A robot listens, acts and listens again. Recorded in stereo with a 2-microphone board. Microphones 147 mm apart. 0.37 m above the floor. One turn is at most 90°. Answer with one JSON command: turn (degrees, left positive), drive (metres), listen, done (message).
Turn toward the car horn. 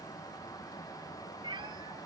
{"listen": true}
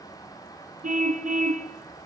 {"turn": -65}
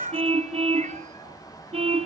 {"turn": -45}
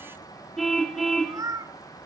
{"done": "Found it: a car horn, straight ahead."}